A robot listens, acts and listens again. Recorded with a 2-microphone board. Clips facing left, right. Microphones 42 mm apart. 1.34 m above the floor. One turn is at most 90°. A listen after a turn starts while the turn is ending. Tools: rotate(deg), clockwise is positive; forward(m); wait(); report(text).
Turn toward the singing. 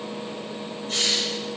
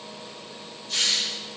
wait()
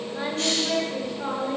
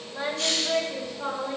rotate(-20)
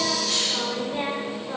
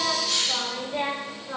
rotate(-30)
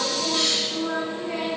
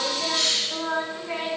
rotate(25)
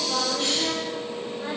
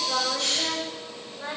report("Facing the singing, over 4 m away.")